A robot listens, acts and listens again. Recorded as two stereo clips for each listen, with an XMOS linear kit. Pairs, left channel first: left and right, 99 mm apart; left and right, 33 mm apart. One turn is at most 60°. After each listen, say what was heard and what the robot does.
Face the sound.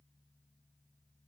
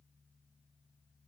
Keep listening.
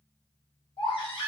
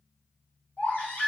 The baby crying: about 60° left or 120° left. Turn 60° left.
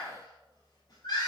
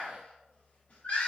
So it is at 50° left. Turn 50° left.
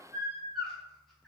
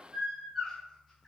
Facing the baby crying, under 1 m away.